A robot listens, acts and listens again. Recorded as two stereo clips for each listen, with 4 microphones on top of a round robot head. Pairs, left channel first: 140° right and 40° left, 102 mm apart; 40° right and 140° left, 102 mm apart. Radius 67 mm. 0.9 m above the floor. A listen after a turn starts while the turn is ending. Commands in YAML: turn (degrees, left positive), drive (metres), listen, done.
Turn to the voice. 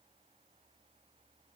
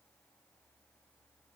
listen: true
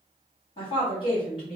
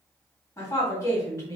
turn: -100
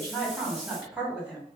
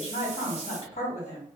turn: -30
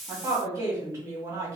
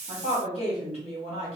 turn: -15
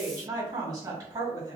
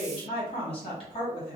done: "Found it: a woman speaking, straight ahead, 1 to 2 m away."